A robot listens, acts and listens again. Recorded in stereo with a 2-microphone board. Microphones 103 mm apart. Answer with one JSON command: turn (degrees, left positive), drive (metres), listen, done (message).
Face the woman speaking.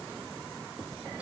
{"listen": true}
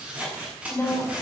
{"turn": 15}
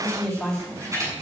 {"turn": 30}
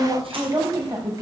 {"turn": -35}
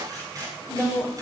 {"turn": -10}
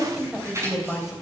{"done": "Facing the woman speaking."}